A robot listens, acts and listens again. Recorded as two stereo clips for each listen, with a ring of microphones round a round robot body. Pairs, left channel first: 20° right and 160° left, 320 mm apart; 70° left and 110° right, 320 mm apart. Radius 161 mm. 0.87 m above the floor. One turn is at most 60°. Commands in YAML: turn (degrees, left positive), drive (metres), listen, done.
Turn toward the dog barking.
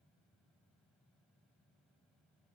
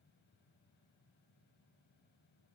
listen: true
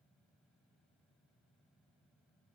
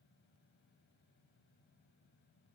listen: true
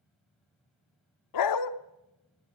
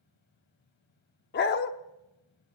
done: "Facing the dog barking."